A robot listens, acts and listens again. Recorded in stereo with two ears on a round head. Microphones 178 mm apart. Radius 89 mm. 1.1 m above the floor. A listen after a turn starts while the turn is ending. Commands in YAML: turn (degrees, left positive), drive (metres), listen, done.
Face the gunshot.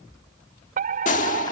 turn: 40
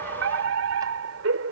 listen: true
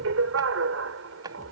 done: "I heard a gunshot, but can't make it out now. It was about straight ahead or 100° left."